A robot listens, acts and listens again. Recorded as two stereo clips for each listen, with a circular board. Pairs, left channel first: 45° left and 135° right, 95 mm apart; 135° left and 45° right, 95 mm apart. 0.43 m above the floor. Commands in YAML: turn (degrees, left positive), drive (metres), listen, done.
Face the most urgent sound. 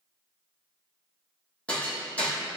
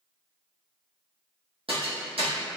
listen: true
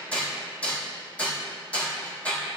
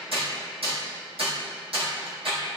listen: true
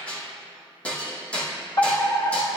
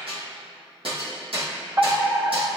done: "Facing the fire alarm."